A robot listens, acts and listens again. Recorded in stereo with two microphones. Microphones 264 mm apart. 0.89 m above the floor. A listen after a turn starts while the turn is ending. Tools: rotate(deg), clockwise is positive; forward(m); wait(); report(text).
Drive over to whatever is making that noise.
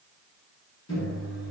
rotate(-90)
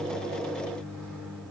forward(1.0)
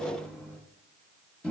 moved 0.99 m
forward(1.0)
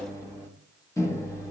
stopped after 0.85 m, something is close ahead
rotate(-15)
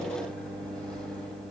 report("I am next to the microwave.")